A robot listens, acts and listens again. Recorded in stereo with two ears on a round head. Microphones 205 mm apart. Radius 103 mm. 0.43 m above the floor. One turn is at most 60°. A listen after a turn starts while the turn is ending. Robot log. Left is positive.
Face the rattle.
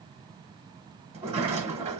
cmd idle
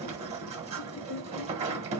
cmd idle
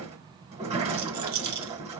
note: The rattle: about 65° right or 115° right.
cmd yaw -60
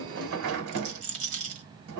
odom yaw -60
note: So it is at 35° right.
cmd yaw -35
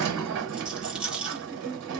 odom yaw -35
end: Facing the rattle.